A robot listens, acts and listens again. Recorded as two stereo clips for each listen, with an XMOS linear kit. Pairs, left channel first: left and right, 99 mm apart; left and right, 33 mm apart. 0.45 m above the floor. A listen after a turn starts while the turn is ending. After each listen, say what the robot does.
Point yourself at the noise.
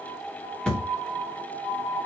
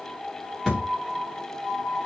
Turn 30° left.
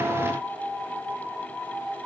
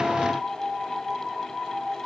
Keep listening.
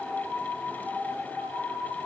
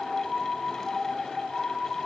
I heard a thud, but can't make it out now. It was about 20° right or 140° left.